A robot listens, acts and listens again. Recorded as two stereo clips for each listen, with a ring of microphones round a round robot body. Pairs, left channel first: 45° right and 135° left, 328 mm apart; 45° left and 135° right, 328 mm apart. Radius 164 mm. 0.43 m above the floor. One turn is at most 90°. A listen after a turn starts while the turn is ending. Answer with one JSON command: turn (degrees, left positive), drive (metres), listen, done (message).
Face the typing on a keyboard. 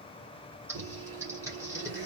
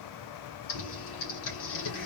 {"turn": 55}
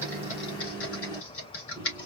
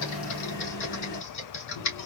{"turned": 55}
{"done": "Facing the typing on a keyboard, 2 to 4 m away."}